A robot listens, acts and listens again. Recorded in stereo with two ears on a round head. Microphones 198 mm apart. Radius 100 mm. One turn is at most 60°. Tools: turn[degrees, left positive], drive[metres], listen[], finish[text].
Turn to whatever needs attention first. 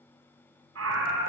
Thought: The scream: about 65° right or 115° right.
Action: turn[-60]
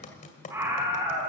Thought: So it is at 10° right.
Action: turn[-10]
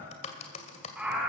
Action: finish[Found it: a scream, straight ahead, 2 to 4 m away.]